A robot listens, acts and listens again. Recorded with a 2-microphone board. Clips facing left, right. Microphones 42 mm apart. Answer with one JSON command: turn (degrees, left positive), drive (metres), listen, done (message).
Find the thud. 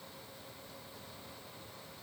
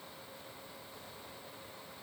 {"listen": true}
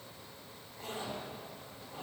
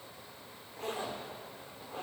{"listen": true}
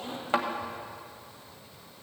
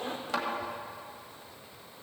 {"turn": 30}
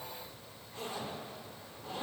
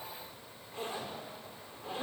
{"listen": true}
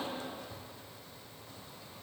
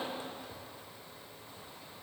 {"done": "I heard a thud, but can't make it out now. It was about straight ahead or 120° left."}